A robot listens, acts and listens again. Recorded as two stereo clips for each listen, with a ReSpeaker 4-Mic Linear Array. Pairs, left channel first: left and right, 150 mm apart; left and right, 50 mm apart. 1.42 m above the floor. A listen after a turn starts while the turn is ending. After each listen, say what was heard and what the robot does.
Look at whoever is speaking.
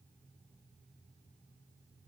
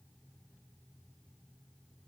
Keep listening.
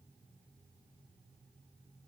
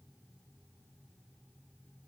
Keep listening.
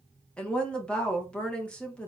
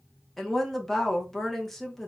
Turn 30° left.
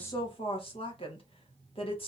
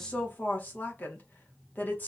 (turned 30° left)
So it is at 140° left. Turn 140° left.
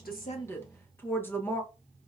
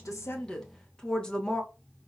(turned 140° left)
The woman speaking is now 15° left. Turn 15° left.
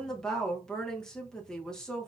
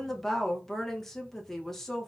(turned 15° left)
Found it: a woman speaking, straight ahead, 1 to 2 m away.